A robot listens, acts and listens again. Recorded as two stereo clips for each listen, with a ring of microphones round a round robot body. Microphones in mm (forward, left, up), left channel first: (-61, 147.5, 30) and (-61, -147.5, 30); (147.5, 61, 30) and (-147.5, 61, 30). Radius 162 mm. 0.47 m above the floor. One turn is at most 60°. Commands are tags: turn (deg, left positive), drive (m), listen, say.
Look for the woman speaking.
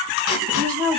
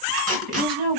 <turn deg="-60"/>
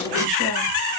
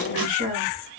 <turn deg="-60"/>
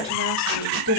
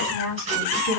<turn deg="-55"/>
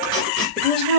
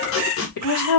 <say>Found it: a woman speaking, straight ahead, 2 to 4 m away.</say>